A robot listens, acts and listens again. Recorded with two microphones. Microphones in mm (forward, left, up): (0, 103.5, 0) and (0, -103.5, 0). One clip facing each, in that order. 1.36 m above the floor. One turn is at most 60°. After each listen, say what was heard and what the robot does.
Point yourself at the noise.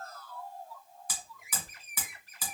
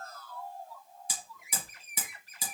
The hammering: about 25° right or 155° right. Turn 25° right.
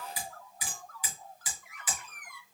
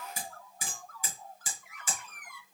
So it is at 130° right. Turn 60° right.
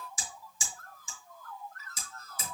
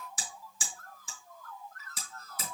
The hammering is now 80° right. Turn 60° right.
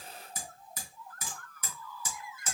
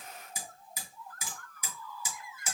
The hammering is now 15° right. Turn 15° right.
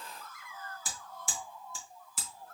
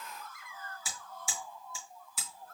Facing the hammering, 2 to 4 m away.